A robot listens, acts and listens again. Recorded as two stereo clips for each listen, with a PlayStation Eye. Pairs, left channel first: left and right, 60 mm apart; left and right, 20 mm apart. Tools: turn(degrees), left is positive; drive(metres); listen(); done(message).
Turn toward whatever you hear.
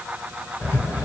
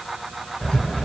turn(degrees=45)
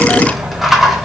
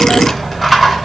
done("Found it: a rattle, straight ahead.")